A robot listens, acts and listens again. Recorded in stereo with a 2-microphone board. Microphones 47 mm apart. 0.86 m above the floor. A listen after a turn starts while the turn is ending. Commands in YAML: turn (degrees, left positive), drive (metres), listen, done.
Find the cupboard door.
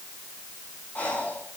listen: true
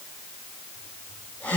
listen: true
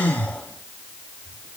done: "I can't make out a cupboard door, only breathing."